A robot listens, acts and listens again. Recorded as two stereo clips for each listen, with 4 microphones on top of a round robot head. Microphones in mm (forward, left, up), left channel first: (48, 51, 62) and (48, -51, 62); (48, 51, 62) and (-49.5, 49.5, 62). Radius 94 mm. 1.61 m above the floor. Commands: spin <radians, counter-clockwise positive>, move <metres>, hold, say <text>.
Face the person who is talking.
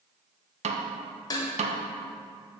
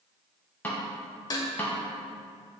hold
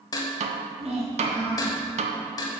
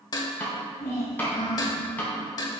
spin -1.31
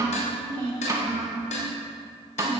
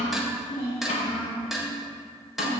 spin -0.87
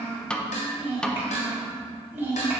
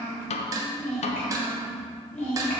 spin -0.35
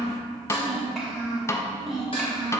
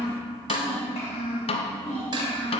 say Facing the child speaking, 2 to 4 m away.